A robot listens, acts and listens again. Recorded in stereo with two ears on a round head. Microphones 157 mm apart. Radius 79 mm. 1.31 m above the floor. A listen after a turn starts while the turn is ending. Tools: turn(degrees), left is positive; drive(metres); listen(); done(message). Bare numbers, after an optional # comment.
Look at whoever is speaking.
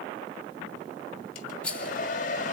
listen()
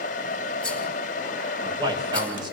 # The man speaking: about 25° right or 155° right.
turn(-25)
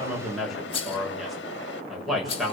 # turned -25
done("Found it: a man speaking, straight ahead.")